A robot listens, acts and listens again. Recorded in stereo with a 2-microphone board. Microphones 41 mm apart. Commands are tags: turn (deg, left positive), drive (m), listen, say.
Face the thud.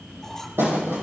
<turn deg="-65"/>
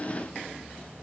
<listen/>
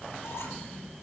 <say>I heard a thud, but can't make it out now. It was about straight ahead or 50° right.</say>